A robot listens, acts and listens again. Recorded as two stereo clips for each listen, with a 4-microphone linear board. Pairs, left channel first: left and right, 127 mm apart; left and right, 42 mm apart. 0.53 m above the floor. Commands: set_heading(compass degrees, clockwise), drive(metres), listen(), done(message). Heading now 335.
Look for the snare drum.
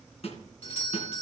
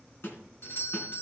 set_heading(280)
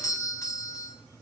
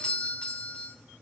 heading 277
listen()
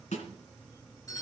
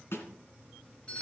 set_heading(207)
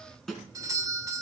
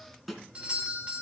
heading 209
done("Facing the snare drum, 2 to 4 m away.")